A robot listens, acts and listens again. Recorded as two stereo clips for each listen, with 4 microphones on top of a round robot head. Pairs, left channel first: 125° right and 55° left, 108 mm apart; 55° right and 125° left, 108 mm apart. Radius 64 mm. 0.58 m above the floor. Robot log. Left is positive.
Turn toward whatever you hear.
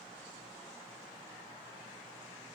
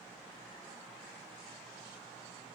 cmd idle
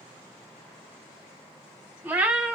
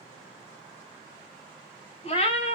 note: The cat meowing: 25° right.
cmd yaw -25
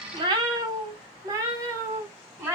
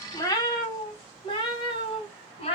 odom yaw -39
note: The cat meowing is now 15° right.
cmd yaw -15
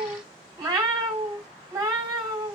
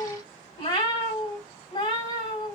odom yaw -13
end: Facing the cat meowing, 1 to 2 m away.